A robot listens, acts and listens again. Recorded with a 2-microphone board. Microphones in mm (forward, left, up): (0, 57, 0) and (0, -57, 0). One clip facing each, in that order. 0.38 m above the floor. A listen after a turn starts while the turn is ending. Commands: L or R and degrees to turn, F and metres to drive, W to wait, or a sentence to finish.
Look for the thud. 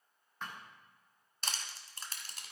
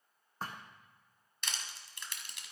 R35
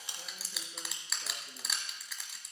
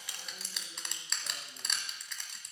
W
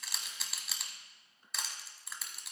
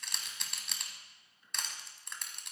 I heard a thud, but can't make it out now. It was about straight ahead or 110° right.